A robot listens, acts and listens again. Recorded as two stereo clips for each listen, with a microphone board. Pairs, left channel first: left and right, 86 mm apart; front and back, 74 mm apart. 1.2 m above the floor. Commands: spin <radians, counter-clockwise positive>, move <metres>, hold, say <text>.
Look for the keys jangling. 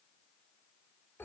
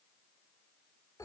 hold
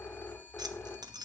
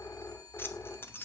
spin -1.05
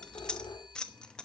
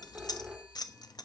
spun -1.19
spin 0.17
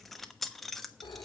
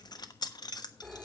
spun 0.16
say Found it: keys jangling, straight ahead, 1 to 2 m away.